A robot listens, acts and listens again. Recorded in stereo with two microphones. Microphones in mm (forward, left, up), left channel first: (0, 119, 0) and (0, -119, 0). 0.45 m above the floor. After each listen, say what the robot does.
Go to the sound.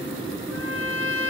Turn 60° right.
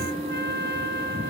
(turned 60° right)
Turn 50° right.
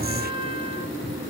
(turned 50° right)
Turn 25° right.
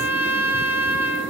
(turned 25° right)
Turn 10° right.
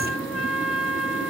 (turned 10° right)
Drive 1.0 m forward.
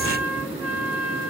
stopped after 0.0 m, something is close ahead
Something is in my way. I am facing the trumpet but have not reached it.